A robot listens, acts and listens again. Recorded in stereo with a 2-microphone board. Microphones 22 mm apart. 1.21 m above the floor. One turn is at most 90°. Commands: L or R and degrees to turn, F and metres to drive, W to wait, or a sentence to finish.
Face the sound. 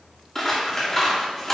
L15
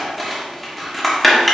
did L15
Facing the scissors, 1 to 2 m away.